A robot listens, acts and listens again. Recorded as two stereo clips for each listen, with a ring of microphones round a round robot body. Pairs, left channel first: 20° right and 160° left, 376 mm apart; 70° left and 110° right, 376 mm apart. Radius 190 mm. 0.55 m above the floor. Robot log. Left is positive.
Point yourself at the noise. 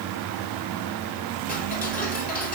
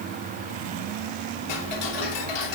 note: The ticking: 45° left.
cmd yaw +45
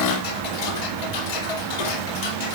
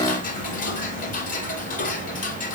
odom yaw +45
end: Found it: ticking, straight ahead.